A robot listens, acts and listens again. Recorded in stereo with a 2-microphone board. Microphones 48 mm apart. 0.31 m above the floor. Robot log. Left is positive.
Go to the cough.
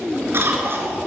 note: The cough: about 55° right or 125° right.
cmd yaw -55
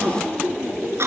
note: So it is at 65° right.
cmd yaw -65
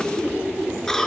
note: The cough is now 10° left.
cmd yaw +10
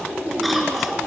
cmd fwd 1.0
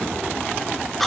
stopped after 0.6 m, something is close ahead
end: Blocked. The cough is further on, straight ahead.